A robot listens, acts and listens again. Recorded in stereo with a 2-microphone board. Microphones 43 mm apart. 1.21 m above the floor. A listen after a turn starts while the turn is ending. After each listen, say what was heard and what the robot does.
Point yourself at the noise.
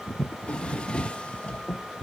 The drawer: about 25° left or 155° left. Turn 25° left.
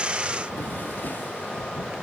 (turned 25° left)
Keep listening.
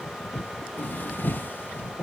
So it is at 130° left. Turn 130° left.
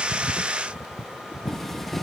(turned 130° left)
Facing the drawer.